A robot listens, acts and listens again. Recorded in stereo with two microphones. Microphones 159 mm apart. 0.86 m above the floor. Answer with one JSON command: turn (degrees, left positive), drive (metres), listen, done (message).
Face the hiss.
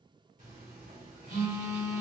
{"listen": true}
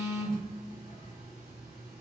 {"listen": true}
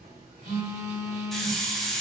{"turn": 30}
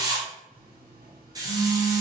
{"turn": -25}
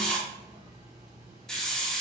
{"done": "Found it: a hiss, straight ahead, under 1 m away."}